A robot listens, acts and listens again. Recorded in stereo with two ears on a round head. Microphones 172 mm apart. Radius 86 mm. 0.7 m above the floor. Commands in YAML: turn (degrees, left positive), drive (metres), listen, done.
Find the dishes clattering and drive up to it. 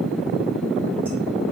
listen: true
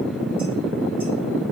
listen: true
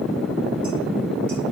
done: "I can't make out dishes clattering."